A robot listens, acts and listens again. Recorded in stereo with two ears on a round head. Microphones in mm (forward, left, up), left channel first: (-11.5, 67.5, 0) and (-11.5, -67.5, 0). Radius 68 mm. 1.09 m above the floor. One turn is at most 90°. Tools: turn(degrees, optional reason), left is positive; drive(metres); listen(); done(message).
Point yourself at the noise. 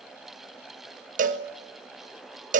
turn(degrees=-55, reason="The cowbell: about 55° right or 125° right.")
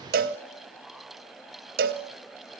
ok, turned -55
turn(degrees=-65, reason="So it is at 65° right.")
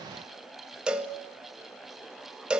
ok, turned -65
done("Found it: a cowbell, straight ahead.")